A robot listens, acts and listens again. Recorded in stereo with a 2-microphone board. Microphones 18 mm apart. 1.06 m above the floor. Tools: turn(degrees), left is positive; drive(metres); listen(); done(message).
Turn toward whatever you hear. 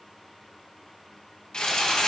turn(degrees=55)
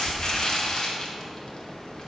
turn(degrees=60)
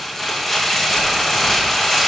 turn(degrees=15)
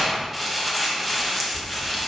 done("Found it: crumpling, straight ahead.")